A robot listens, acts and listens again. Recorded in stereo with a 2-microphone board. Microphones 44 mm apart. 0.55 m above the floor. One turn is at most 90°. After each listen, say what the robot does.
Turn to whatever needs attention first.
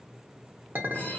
Keep listening.
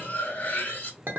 Keep listening.
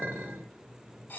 I can't make out anything urgent to turn to.